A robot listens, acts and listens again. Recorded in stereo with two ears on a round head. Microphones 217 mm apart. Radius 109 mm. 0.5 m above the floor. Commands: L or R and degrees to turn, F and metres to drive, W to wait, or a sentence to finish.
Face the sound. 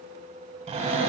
R25
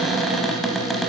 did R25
Found it: a cupboard door, straight ahead, under 1 m away.